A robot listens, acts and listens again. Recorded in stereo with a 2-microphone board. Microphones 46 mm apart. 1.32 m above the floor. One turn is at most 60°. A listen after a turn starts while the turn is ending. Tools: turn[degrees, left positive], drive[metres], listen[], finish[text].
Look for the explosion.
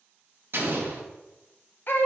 Thought: The explosion: about 55° right or 125° right.
Action: turn[-55]
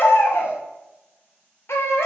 Action: listen[]
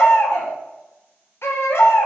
Action: finish[I heard an explosion, but can't make it out now. It was about straight ahead or 70° right.]